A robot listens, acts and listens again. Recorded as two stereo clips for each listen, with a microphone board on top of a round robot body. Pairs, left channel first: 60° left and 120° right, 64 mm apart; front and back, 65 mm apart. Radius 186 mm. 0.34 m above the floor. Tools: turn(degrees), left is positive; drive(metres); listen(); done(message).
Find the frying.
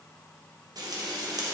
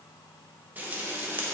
turn(degrees=-115)
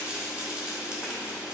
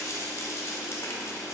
turn(degrees=-45)
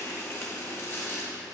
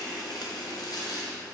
turn(degrees=10)
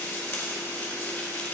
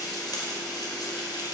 done("Facing the frying.")